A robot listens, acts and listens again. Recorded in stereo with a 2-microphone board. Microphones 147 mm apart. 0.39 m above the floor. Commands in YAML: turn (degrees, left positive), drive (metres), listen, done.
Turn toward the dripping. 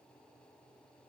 listen: true
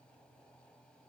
listen: true
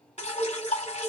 turn: 50
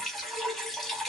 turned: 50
done: "Facing the dripping, under 1 m away."